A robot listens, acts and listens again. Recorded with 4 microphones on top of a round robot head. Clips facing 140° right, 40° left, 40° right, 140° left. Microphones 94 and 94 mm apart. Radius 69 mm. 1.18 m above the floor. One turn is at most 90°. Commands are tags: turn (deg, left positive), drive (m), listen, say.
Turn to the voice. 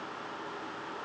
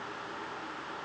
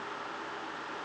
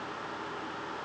<listen/>
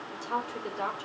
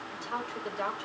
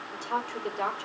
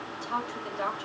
<turn deg="-85"/>
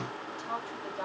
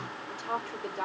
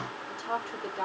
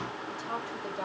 <say>Found it: a woman speaking, straight ahead.</say>